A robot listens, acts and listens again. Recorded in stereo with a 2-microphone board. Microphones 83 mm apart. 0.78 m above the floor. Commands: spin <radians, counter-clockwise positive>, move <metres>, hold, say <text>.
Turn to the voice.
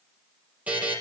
hold
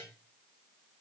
hold
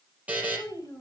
spin 0.79
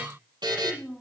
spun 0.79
say Facing the child speaking, over 4 m away.